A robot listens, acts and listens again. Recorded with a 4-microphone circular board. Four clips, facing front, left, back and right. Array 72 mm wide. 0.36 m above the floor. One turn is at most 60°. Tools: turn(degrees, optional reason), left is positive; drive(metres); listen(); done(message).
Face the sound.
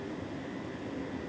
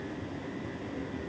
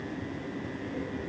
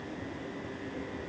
listen()
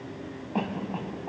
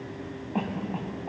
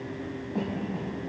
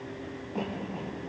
turn(degrees=30, reason="The cough: 30° left.")
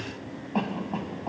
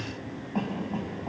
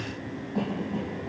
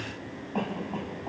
turn(degrees=-15, reason="The cough is now 15° right.")
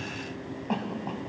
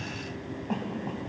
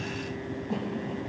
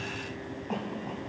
done("Facing the cough, 2 to 4 m away.")